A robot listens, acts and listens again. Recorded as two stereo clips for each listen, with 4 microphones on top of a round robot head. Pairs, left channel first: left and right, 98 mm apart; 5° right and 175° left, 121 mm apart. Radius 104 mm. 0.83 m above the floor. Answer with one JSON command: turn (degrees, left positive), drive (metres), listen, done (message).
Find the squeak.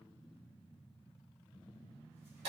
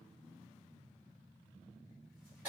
{"listen": true}
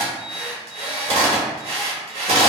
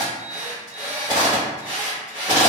{"listen": true}
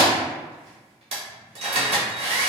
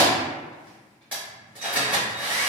{"done": "I can't make out a squeak to turn to."}